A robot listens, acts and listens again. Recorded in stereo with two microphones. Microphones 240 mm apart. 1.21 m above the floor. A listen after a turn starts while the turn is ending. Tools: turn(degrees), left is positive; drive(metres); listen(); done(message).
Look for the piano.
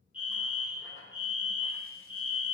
listen()
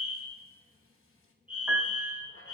turn(degrees=-30)
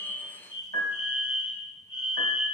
turn(degrees=-145)
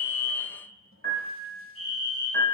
turn(degrees=-50)
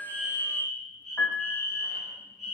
done("Found it: a piano, straight ahead.")